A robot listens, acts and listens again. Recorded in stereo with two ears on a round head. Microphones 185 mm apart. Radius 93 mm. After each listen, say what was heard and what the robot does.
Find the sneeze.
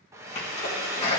The sneeze: about 30° left or 150° left. Turn 30° left.
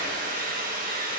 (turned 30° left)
Keep listening.
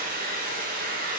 I heard a sneeze, but can't make it out now. It was about straight ahead or 120° left.